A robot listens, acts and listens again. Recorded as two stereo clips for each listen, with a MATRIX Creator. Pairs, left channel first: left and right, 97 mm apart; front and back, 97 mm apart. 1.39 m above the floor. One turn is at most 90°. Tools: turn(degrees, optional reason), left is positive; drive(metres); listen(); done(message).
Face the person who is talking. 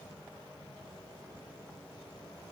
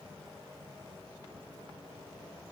listen()
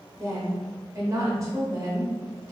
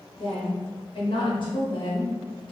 turn(degrees=-30, reason="The woman speaking: 30° right.")
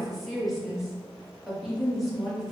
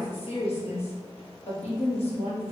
done("Facing the woman speaking.")